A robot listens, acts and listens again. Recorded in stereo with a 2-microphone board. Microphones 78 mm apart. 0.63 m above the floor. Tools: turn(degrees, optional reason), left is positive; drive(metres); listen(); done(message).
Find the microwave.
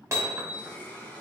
listen()
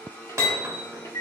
turn(degrees=50, reason="The microwave: about 50° left or 130° left.")
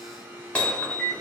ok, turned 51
turn(degrees=10, reason="So it is at 10° left.")
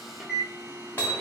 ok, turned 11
done("Facing the microwave, 1 to 2 m away.")